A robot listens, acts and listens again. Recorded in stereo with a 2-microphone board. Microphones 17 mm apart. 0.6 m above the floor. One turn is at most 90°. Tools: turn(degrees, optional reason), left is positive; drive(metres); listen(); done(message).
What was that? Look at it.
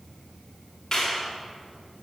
turn(degrees=20, reason="The clap: about 20° left or 160° left.")
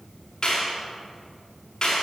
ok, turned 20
turn(degrees=90, reason="So it is at 140° left.")
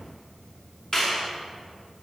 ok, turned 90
turn(degrees=35, reason="The clap is now 35° left.")
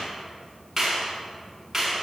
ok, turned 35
turn(degrees=-10, reason="The clap is now 10° right.")
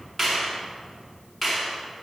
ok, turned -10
done("Facing the clap.")